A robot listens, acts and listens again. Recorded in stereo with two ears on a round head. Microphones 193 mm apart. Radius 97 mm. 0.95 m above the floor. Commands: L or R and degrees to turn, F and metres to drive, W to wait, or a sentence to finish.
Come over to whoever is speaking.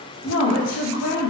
L70
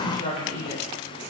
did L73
L35
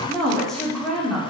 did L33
F1.0
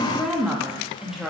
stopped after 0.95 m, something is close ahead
I am next to the woman speaking.